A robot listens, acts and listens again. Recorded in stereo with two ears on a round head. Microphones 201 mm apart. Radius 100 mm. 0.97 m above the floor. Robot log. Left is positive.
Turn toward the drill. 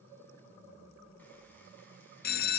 cmd idle
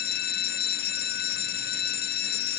cmd idle
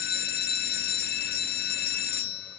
end: I can't make out a drill to turn to.